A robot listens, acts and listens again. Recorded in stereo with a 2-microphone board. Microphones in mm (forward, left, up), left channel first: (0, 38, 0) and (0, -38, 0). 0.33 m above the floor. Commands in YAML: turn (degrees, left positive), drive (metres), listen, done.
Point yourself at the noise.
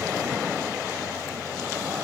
listen: true
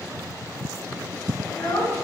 turn: 70
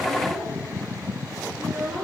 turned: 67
done: "Facing the child speaking."